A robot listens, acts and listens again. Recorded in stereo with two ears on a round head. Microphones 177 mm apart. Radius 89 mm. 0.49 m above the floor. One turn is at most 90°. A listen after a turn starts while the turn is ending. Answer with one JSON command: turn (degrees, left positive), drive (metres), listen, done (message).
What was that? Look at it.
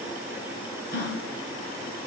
{"turn": 50}
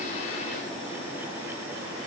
{"listen": true}
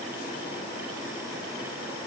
{"done": "I heard a gasp, but can't make it out now. It was about straight ahead or 80° left."}